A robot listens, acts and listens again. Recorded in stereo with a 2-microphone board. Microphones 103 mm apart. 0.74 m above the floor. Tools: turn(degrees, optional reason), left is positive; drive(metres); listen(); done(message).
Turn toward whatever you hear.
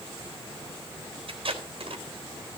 turn(degrees=-65, reason="The tape being pulled: about 65° right or 115° right.")
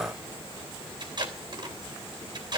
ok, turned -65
turn(degrees=-45, reason="So it is at 45° right.")
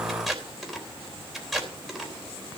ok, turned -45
done("Found it: tape being pulled, straight ahead, 2 to 4 m away.")